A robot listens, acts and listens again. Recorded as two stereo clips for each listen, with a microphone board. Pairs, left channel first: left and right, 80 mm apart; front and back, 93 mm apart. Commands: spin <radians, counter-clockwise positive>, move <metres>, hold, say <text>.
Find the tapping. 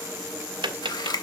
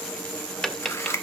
spin -1.48
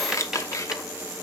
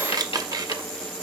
hold
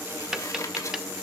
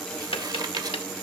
spin -0.17
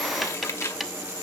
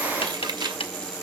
say Found it: tapping, straight ahead.